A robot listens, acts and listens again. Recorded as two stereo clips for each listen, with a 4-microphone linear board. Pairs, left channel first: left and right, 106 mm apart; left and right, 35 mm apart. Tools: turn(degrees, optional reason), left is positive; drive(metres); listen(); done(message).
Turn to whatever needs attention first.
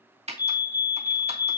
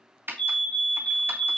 turn(degrees=40, reason="The fire alarm: about 40° left or 140° left.")
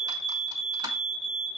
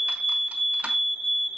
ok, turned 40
done("Found it: a fire alarm, straight ahead, 2 to 4 m away.")